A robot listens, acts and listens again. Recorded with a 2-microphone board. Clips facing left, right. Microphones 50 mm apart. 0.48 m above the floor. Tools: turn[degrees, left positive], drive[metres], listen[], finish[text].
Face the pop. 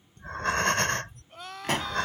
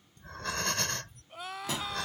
Thought: The pop: about 55° left or 125° left.
Action: turn[55]
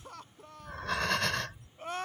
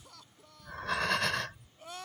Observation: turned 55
Action: listen[]
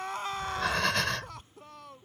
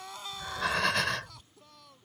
Action: finish[I heard a pop, but can't make it out now. It was about straight ahead or 70° left.]